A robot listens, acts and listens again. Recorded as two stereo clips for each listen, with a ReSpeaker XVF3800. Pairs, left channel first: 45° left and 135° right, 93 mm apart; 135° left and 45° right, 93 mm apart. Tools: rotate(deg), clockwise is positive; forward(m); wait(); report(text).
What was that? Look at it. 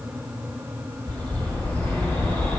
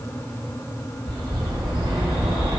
rotate(25)
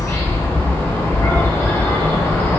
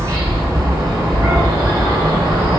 rotate(10)
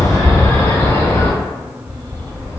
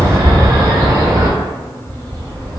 report("Found it: a bird, straight ahead.")